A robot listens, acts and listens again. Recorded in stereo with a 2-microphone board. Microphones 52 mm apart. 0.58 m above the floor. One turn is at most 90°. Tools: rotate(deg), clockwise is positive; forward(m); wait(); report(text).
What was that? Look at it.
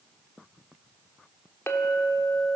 rotate(-60)
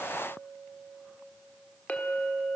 rotate(-35)
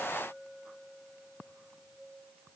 report("Found it: a clink, straight ahead.")